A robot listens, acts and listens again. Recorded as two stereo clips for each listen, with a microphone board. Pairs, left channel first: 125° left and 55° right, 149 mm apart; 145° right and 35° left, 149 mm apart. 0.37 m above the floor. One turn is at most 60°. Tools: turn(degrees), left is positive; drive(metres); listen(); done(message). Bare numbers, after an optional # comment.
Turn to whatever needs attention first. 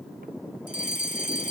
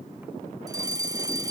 # The fire alarm: 100° left.
turn(60)
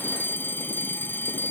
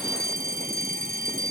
# The fire alarm is now 50° left.
turn(50)
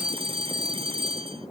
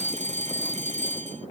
done("Found it: a fire alarm, straight ahead.")